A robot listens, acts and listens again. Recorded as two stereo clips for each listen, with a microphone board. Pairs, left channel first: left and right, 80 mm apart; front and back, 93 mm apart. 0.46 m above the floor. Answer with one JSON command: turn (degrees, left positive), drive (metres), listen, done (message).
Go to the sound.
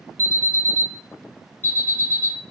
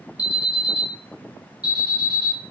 {"turn": 35}
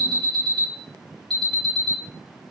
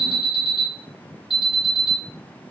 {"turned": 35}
{"drive": 1.0}
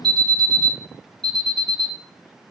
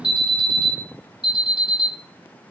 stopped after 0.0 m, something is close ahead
{"turn": 10}
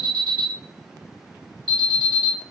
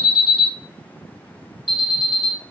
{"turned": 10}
{"done": "Something is in my way. I am facing the alarm but have not reached it."}